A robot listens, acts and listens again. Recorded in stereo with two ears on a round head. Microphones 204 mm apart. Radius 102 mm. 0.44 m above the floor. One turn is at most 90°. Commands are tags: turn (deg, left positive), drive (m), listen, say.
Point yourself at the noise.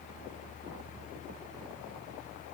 <listen/>
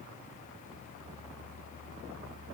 <listen/>
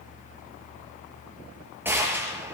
<turn deg="-30"/>
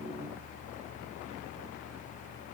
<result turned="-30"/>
<listen/>
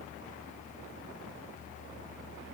<say>I heard a gunshot, but can't make it out now. It was about 20° left or 140° right.</say>